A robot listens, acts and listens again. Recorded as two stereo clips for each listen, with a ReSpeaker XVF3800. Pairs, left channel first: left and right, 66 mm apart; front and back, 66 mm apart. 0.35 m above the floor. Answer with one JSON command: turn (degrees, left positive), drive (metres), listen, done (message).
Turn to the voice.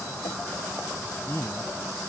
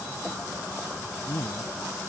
{"turn": 40}
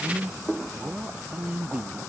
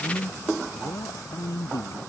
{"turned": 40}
{"turn": -20}
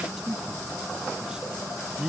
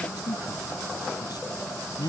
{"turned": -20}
{"turn": -10}
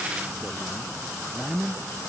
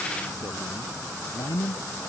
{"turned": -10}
{"done": "Found it: a man speaking, straight ahead."}